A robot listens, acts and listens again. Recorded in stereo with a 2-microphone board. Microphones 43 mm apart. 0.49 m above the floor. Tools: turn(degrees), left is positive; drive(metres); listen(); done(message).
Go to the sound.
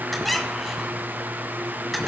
turn(degrees=30)
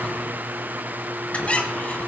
turn(degrees=145)
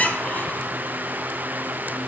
turn(degrees=40)
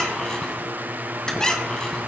turn(degrees=15)
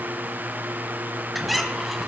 drive(metres=1.0)
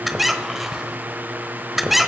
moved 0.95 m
drive(metres=1.0)
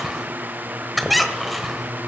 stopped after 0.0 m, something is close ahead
done("Arrived at the squeak, straight ahead.")